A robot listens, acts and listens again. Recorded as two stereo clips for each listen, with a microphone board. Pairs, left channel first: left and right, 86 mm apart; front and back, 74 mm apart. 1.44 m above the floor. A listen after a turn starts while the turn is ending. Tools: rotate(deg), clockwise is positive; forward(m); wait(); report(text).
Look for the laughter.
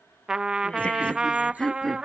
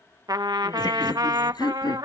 report("Found it: laughter, straight ahead.")